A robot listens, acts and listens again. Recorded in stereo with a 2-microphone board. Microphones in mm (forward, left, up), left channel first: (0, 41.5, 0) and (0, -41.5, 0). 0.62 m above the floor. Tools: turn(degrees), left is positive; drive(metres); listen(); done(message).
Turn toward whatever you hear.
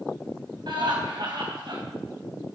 turn(degrees=-65)
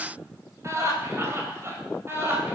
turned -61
turn(degrees=-30)
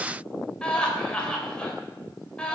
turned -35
turn(degrees=15)
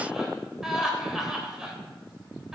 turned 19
done("Found it: laughter, straight ahead.")